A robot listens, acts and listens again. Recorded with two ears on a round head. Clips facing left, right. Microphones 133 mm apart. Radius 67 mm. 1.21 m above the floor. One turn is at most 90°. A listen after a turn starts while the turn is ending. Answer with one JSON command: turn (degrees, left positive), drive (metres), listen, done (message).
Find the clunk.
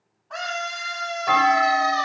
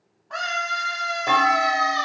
{"turn": -50}
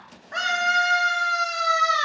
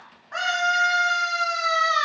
{"listen": true}
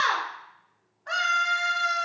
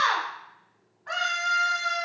{"done": "I heard a clunk, but can't make it out now. It was about straight ahead or 80° right."}